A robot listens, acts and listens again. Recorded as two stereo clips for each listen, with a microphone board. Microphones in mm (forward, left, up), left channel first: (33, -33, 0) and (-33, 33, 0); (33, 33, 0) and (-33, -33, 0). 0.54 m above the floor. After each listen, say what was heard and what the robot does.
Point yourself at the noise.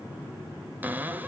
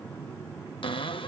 The cupboard door: 65° left. Turn 65° left.
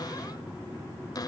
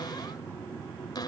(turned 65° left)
Facing the cupboard door.